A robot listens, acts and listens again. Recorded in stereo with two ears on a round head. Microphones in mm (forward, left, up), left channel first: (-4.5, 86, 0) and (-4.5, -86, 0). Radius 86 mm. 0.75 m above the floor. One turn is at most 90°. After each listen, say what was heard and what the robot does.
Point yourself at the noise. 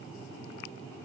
Keep listening.
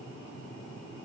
Keep listening.
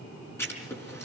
Turn 30° left.
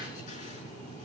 Keep listening.
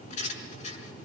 So it is at 140° left. Turn 90° left.
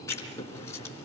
The writing is now 15° left. Turn 15° left.
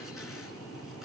Keep listening.
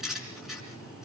Found it: writing, straight ahead, over 4 m away.